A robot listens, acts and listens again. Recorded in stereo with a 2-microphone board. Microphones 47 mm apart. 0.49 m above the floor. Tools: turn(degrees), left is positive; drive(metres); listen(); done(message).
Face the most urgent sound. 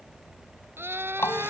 turn(degrees=-55)
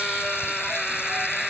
done("Found it: a scream, straight ahead.")